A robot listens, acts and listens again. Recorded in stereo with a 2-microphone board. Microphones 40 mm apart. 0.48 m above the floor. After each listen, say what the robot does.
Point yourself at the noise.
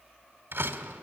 Turn 90° right.
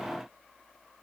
I heard a door slam from this way, but can't make it out now.